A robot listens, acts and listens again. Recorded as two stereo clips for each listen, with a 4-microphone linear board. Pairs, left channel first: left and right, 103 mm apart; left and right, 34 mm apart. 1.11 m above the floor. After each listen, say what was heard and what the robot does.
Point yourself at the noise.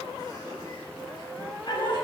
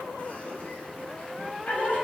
The laughter: about 45° left or 135° left. Turn 45° left.
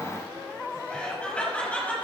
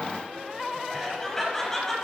So it is at 15° left. Turn 15° left.
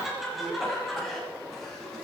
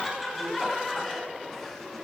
Found it: laughter, straight ahead.